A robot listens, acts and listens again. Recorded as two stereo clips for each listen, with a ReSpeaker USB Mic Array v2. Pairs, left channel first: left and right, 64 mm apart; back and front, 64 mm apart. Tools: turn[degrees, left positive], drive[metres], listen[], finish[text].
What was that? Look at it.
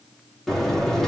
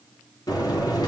Thought: The buzzer: 175° left.
Action: turn[175]
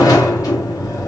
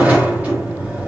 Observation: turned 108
Thought: The buzzer is now 70° left.
Action: turn[70]
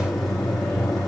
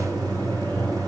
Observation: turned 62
Action: finish[Found it: a buzzer, straight ahead.]